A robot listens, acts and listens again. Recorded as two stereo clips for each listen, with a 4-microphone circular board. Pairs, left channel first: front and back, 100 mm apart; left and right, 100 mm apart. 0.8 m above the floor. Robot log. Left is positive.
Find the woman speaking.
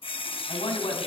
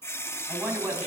note: The woman speaking: 20° right.
cmd yaw -20
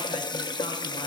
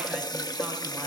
cmd idle
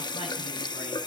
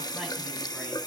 cmd idle
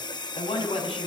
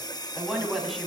end: Facing the woman speaking.